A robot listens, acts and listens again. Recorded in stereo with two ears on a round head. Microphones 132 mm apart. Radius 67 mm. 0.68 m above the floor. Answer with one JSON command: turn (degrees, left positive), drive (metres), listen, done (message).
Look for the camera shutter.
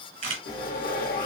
{"turn": -45}
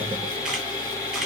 {"listen": true}
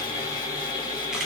{"listen": true}
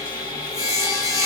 {"done": "I heard a camera shutter, but can't make it out now. It was about straight ahead or 90° right."}